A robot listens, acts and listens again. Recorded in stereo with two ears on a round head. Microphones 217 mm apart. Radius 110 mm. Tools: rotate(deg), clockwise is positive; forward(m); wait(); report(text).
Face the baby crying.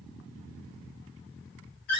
wait()
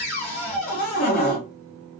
wait()
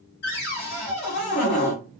report("I can't make out a baby crying, only a cupboard door.")